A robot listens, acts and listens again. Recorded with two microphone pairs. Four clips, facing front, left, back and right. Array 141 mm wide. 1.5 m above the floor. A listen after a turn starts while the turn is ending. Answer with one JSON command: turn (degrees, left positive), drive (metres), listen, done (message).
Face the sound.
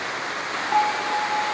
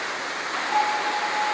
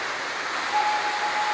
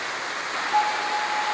{"turn": 30}
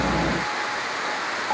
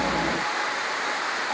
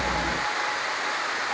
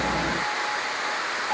{"done": "Facing the bell, over 4 m away."}